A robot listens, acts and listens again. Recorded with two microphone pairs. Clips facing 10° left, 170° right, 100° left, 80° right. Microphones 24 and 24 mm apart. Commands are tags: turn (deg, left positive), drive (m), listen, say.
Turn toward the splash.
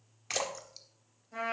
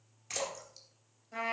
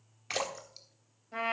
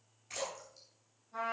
<turn deg="70"/>
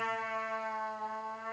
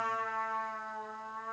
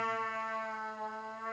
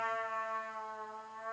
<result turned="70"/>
<say>Facing where the splash came from. I can't hear it now.</say>